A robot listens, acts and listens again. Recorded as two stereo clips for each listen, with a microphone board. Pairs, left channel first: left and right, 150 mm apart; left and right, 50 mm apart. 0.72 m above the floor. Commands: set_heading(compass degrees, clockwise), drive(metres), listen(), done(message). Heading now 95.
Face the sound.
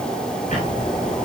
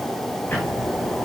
set_heading(45)
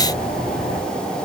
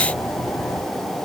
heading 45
set_heading(325)
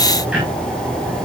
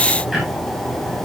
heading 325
done("Found it: ticking, straight ahead, over 4 m away.")